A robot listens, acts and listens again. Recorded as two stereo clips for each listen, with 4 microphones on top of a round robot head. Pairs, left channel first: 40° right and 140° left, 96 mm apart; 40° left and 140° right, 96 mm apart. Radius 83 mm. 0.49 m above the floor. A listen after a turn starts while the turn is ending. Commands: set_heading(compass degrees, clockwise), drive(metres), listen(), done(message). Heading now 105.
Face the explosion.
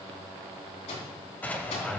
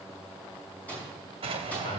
set_heading(220)
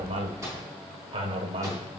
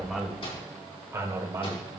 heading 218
done("I heard an explosion from this way, but can't make it out now.")